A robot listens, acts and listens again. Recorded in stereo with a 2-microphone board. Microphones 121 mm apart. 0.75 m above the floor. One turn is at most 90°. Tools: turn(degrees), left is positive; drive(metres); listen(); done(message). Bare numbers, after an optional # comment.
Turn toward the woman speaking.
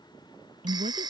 turn(-90)
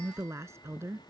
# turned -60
# So it is at 20° right.
turn(-20)
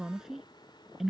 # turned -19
done("Facing the woman speaking.")